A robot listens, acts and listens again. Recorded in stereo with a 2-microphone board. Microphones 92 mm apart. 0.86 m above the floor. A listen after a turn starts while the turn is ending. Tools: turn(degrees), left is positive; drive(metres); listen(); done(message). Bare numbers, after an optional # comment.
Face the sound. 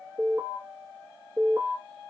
# The alarm: about 35° right or 145° right.
turn(-35)
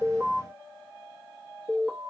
done("Found it: an alarm, straight ahead, 1 to 2 m away.")